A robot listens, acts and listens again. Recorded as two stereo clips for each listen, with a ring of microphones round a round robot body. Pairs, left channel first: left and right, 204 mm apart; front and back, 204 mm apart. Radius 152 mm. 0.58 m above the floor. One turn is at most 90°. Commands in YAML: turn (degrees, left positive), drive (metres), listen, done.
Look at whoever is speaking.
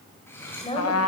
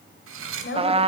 turn: 30
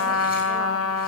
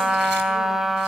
listen: true
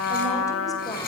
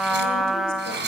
listen: true
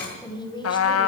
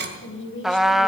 turn: 20
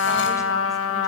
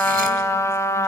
listen: true
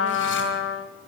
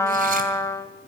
listen: true
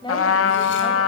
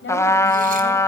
turn: 25
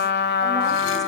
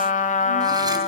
listen: true
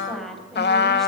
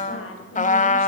done: "Facing the woman speaking."